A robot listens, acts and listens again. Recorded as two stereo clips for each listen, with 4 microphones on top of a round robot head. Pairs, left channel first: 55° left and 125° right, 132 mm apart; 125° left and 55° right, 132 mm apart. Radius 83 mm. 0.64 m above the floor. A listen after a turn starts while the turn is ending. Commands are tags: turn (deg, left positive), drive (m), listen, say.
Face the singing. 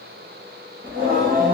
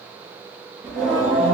<turn deg="-135"/>
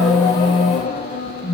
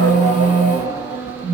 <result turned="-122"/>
<turn deg="20"/>
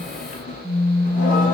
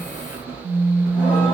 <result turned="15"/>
<turn deg="20"/>
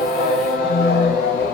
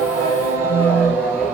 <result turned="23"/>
<turn deg="25"/>
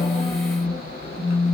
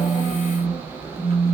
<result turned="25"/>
<say>Found it: singing, straight ahead, 1 to 2 m away.</say>